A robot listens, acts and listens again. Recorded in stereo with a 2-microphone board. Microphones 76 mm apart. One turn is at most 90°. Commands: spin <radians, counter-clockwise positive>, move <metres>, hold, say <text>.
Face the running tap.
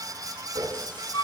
spin -1.13
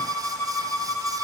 hold
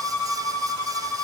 hold
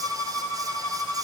say I heard a running tap, but can't make it out now. It was about straight ahead or 50° right.